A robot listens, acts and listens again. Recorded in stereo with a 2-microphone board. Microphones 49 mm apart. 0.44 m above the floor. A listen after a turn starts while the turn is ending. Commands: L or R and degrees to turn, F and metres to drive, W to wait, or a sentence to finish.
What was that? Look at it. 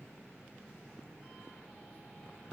W
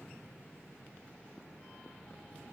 W
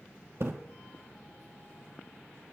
R65
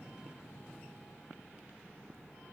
W
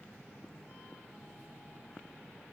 I heard a splash, but can't make it out now. It was about straight ahead or 50° right.